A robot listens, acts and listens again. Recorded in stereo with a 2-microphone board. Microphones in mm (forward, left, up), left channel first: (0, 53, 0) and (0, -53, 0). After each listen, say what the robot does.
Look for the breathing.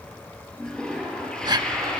Turn 45° right.
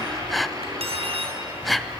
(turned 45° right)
Found it: breathing, straight ahead.